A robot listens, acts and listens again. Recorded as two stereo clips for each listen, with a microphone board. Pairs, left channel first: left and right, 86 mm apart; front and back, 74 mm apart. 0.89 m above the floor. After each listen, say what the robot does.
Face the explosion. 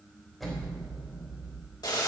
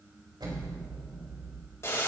Turn 180° left.
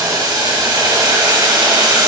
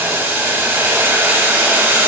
Facing where the explosion came from. I can't hear it now.